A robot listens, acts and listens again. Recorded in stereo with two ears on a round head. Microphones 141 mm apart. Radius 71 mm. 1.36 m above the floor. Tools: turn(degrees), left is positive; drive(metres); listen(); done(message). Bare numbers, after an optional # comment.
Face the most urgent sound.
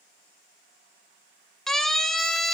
turn(30)
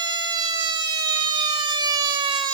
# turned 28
# So it is at 25° right.
turn(-25)
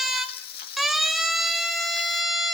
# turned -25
done("Facing the siren.")